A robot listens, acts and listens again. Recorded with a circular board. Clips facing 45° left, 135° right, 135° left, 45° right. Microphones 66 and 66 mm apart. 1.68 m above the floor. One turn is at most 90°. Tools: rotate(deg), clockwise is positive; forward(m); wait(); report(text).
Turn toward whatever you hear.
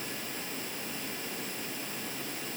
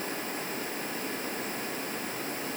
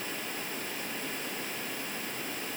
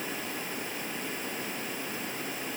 wait()
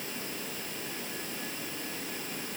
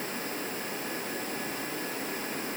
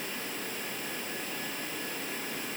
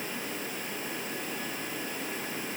wait()
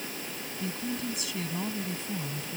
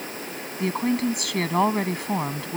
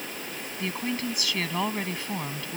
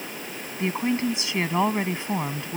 rotate(90)
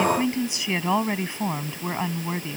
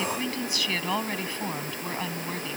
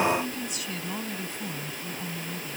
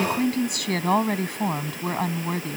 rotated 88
rotate(25)
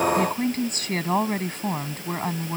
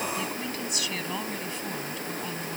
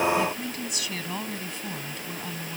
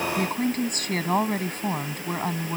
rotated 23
report("Found it: a woman speaking, straight ahead.")